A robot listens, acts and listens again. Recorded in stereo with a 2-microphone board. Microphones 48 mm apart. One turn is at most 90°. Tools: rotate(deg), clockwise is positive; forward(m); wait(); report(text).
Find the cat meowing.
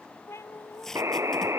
rotate(-65)
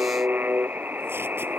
wait()
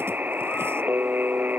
wait()
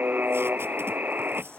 report("I heard a cat meowing, but can't make it out now. It was about straight ahead or 50° left.")